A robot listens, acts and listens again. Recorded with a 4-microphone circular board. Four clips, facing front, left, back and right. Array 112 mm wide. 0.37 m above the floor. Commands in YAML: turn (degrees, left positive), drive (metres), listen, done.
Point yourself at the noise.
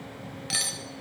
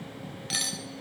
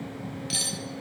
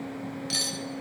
turn: 20
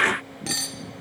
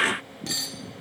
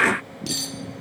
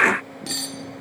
done: "Facing the cutlery clinking."